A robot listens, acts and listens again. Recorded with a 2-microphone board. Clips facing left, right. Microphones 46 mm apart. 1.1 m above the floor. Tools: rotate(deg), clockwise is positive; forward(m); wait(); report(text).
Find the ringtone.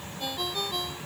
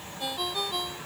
rotate(30)
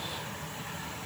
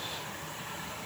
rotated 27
wait()
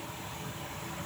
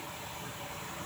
wait()
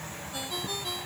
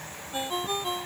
rotate(145)
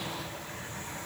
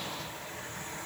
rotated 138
wait()
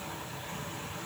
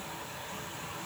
wait()
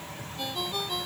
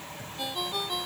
report("Facing the ringtone.")